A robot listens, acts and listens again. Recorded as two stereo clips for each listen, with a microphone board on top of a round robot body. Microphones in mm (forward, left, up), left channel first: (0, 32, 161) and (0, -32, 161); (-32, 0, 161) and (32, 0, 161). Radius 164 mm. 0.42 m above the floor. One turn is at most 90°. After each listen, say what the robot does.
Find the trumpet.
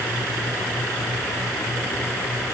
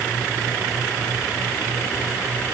Keep listening.
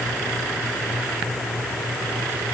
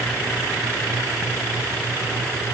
Keep listening.
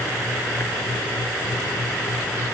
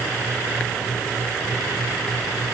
I can't make out a trumpet.